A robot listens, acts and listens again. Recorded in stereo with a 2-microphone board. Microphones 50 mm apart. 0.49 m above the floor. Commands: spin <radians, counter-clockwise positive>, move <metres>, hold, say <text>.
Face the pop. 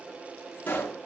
spin 0.70
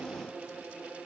hold
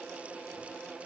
say I heard a pop, but can't make it out now. It was about straight ahead or 100° left.